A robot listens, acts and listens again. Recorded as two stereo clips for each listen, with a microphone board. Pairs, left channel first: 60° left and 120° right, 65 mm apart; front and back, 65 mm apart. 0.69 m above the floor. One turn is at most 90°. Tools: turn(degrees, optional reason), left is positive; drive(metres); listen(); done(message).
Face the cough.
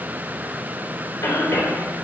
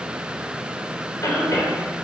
turn(degrees=40, reason="The cough: 40° left.")
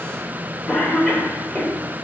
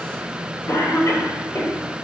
done("Facing the cough, 2 to 4 m away.")